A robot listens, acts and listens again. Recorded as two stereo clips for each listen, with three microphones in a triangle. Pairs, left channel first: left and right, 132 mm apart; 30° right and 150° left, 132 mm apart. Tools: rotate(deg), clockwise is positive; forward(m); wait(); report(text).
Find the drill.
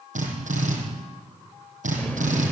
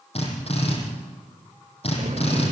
rotate(70)
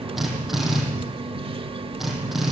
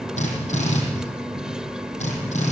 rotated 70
report("Facing the drill, over 4 m away.")